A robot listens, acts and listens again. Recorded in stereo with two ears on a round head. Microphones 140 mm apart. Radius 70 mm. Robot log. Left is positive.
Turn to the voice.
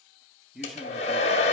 cmd yaw +30
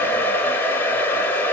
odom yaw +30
cmd idle
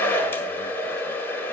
cmd idle
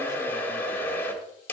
end: I heard a man speaking, but can't make it out now. It was about 30° right or 150° left.